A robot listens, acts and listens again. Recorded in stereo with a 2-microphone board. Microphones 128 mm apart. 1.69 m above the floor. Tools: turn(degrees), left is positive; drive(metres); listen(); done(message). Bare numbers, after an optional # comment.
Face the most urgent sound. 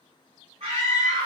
# The scream: about 55° right or 125° right.
turn(-55)
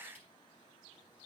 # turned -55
listen()
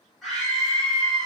done("Found it: a scream, straight ahead, over 4 m away.")